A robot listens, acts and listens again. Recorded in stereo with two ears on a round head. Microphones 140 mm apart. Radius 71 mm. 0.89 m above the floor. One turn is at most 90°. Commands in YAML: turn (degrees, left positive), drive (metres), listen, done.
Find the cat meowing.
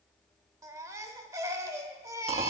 listen: true
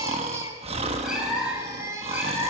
turn: -30
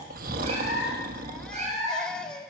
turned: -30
turn: -90
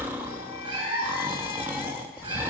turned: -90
turn: -30
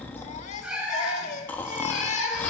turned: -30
done: "Found it: a cat meowing, straight ahead, 2 to 4 m away."